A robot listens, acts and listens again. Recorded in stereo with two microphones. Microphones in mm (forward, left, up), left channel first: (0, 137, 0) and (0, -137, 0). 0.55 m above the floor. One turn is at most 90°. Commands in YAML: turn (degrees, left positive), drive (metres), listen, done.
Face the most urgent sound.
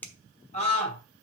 turn: 20
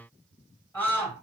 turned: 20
done: "Found it: a scream, straight ahead, 2 to 4 m away."